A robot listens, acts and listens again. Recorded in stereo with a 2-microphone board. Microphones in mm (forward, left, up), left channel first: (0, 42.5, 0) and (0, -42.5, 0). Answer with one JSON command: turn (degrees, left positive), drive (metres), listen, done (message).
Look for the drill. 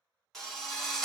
{"turn": 30}
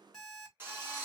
{"turn": -30}
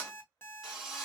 {"done": "Found it: a drill, straight ahead, 2 to 4 m away."}